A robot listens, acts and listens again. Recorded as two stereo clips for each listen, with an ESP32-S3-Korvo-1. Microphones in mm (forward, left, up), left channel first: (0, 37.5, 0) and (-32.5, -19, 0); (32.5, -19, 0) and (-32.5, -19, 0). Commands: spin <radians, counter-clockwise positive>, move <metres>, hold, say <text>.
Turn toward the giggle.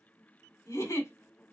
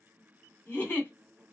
spin 0.96
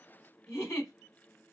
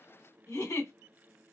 spin 0.35
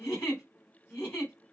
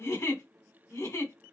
spin 0.17
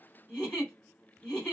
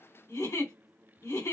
say Found it: a giggle, straight ahead, 2 to 4 m away.